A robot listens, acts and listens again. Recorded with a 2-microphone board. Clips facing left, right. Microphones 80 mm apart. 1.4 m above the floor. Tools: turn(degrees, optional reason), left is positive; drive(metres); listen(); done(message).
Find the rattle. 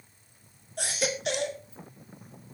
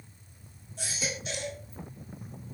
listen()
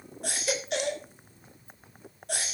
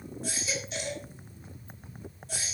listen()
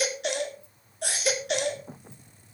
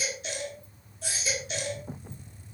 done("I can't make out a rattle to turn to.")